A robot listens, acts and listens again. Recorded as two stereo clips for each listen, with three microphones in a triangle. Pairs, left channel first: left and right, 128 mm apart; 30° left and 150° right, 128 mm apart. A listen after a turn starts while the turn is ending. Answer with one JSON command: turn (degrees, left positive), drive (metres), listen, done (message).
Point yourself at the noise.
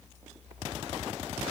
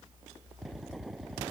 {"listen": true}
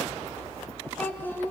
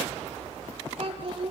{"turn": 165}
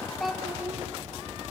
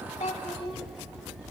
{"listen": true}
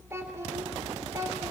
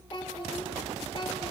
{"turn": -25}
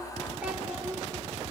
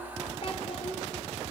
{"turn": -10}
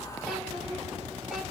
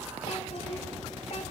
{"listen": true}
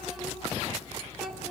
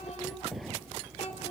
{"done": "Found it: a child speaking, straight ahead."}